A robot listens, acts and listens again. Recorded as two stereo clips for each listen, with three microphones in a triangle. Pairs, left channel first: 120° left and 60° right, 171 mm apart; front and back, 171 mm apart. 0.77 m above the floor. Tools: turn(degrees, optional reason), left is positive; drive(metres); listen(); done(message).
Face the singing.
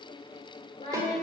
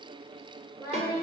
turn(degrees=65, reason="The singing: 65° left.")
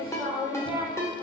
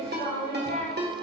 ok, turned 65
turn(degrees=15, reason="The singing is now 15° left.")
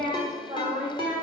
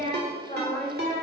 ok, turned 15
turn(degrees=-15, reason="The singing is now 15° right.")
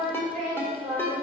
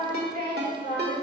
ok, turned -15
turn(degrees=-15, reason="The singing is now 15° right.")
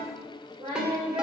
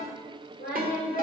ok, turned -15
turn(degrees=-10, reason="The singing is now 10° right.")
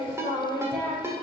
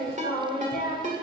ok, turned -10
done("Found it: singing, straight ahead, 2 to 4 m away.")